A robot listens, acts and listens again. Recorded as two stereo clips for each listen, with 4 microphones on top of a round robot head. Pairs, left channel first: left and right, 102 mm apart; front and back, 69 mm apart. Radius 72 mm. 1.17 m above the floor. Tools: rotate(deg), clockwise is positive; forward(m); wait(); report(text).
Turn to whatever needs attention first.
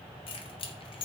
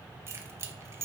wait()
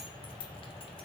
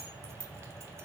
wait()
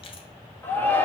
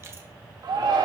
rotate(-160)
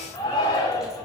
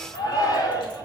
rotate(-30)
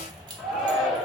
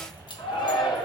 report("Facing the shout.")